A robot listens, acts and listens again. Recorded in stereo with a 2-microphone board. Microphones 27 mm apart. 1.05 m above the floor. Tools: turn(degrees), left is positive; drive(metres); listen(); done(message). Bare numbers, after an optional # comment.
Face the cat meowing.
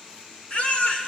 listen()
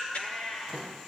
# The cat meowing: about 45° left or 135° left.
turn(45)
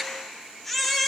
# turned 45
listen()
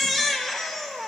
listen()
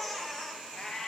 # So it is at 30° left.
turn(30)
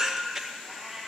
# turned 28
done("Facing the cat meowing.")